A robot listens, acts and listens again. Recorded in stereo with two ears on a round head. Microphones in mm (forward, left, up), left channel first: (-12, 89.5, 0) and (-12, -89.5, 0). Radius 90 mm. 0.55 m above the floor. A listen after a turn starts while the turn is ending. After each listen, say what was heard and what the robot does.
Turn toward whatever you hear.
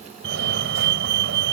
The fire alarm: about 65° right or 115° right. Turn 65° right.
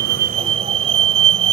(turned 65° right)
So it is at 35° right. Turn 35° right.
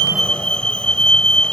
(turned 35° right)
Found it: a fire alarm, straight ahead.